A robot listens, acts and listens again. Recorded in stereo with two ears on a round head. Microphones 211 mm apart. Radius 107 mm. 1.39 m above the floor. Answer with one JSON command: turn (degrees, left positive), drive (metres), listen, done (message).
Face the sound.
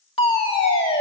{"turn": 25}
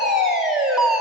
{"done": "Found it: a fire alarm, straight ahead."}